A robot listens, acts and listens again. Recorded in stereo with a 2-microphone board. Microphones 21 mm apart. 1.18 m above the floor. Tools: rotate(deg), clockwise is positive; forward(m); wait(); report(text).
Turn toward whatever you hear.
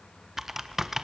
rotate(15)
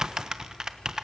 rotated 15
rotate(150)
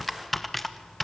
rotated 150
report("Facing the typing on a keyboard.")